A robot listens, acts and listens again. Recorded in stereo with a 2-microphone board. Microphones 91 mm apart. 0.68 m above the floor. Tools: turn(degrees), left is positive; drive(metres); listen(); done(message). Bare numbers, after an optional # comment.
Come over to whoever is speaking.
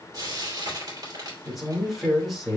turn(30)
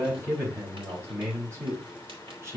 # So it is at 30° right.
turn(-30)
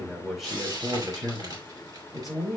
drive(1.0)
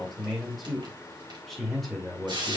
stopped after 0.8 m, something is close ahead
done("Blocked. The man speaking is further on, straight ahead.")